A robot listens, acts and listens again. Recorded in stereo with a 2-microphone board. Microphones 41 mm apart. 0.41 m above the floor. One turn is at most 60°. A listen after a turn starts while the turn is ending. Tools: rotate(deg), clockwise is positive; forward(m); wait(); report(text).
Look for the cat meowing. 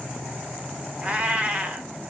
rotate(30)
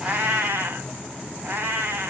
rotate(60)
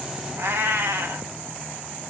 rotate(60)
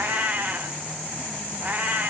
rotate(40)
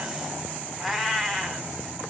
report("Found it: a cat meowing, straight ahead.")